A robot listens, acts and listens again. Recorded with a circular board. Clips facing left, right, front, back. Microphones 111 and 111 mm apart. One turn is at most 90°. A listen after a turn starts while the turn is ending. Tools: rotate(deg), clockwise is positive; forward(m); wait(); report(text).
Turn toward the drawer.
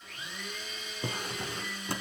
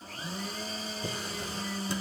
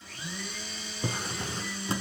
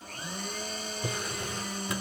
rotate(-60)
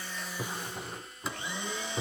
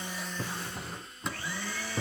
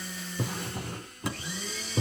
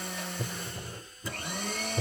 report("Found it: a drawer, straight ahead.")